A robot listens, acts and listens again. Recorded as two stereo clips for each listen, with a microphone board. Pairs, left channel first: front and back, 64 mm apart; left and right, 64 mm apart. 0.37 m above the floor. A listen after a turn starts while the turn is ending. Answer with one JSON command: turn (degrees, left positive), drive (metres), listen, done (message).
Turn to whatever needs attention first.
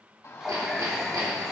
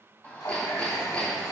{"turn": 25}
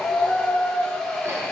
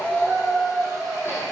{"done": "Found it: a shout, straight ahead."}